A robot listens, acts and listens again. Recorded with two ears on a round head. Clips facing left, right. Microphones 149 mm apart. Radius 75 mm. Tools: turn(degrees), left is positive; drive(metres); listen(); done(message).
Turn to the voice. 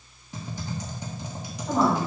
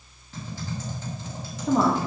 turn(degrees=-50)
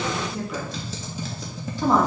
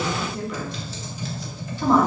done("Found it: a woman speaking, straight ahead, 1 to 2 m away.")